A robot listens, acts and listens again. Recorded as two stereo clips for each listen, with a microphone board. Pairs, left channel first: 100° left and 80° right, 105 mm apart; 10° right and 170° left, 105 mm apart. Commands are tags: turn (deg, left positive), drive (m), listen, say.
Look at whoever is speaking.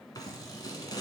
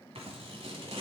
<listen/>
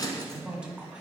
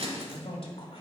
<say>Found it: a man speaking, straight ahead, 1 to 2 m away.</say>